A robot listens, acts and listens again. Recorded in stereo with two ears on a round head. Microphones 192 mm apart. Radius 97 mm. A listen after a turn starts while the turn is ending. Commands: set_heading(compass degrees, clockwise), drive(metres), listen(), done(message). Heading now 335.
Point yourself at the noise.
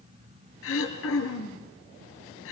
set_heading(265)
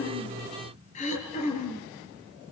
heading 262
set_heading(227)
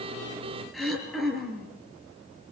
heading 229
done("Found it: throat clearing, straight ahead.")